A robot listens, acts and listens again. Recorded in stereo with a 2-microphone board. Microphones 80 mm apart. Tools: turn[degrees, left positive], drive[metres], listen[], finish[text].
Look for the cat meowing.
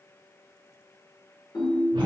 Action: listen[]
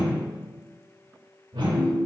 Action: listen[]
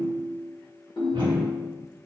Action: finish[I can't make out a cat meowing to turn to.]